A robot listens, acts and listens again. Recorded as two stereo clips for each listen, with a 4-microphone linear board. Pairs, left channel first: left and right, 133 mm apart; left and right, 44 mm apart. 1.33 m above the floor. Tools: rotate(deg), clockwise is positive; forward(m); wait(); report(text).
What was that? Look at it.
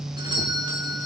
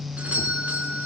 rotate(35)
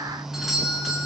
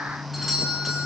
report("Facing the doorbell.")